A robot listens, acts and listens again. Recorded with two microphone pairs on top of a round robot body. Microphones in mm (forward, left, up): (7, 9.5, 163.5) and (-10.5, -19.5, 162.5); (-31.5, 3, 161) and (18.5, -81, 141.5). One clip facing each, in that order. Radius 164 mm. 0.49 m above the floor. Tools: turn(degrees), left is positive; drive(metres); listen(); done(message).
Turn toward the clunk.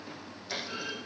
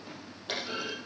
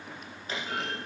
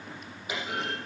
turn(degrees=-140)
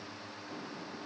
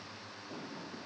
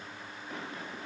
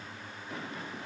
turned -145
done("Facing where the clunk came from. I can't hear it now.")